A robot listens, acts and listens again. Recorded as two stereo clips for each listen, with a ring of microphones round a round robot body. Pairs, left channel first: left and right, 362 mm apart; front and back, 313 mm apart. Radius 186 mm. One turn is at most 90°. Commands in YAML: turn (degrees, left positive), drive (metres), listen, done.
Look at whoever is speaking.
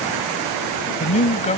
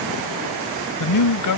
turn: 20
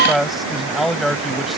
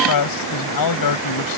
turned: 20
done: "Found it: a man speaking, straight ahead."